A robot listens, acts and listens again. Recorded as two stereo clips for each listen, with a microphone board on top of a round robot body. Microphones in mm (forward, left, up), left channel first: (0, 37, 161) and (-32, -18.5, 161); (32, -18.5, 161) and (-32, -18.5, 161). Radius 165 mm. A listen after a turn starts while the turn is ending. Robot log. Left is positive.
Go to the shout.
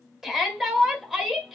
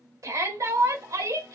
note: The shout: 160° left.
cmd yaw +160
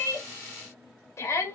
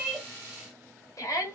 note: The shout is now 25° left.
cmd yaw +25
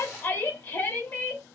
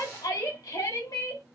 cmd fwd 1.0
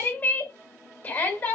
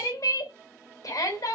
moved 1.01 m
cmd fwd 1.0
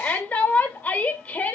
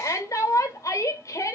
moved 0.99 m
cmd fwd 1.0
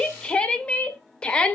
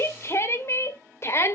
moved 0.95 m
cmd fwd 1.0
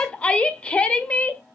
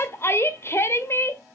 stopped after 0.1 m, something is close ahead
end: Arrived at the shout, straight ahead.